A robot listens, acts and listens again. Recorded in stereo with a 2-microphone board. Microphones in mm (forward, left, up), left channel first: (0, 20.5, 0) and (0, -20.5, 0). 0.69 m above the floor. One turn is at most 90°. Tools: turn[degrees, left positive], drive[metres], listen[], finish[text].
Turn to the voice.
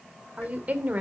Thought: The woman speaking: about 40° right or 140° right.
Action: turn[-40]
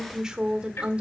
Thought: So it is at 25° right.
Action: turn[-25]
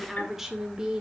Thought: The woman speaking is now 15° right.
Action: turn[-15]
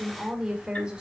Thought: The woman speaking is now 20° right.
Action: turn[-20]
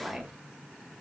Action: finish[Facing the woman speaking.]